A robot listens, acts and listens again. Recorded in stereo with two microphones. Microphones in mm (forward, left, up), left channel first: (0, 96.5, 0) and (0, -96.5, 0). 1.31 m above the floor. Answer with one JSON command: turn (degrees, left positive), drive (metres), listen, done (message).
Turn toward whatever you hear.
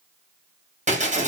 {"turn": -40}
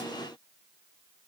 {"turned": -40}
{"listen": true}
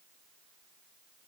{"done": "I heard breaking glass, but can't make it out now. It was about straight ahead or 100° right."}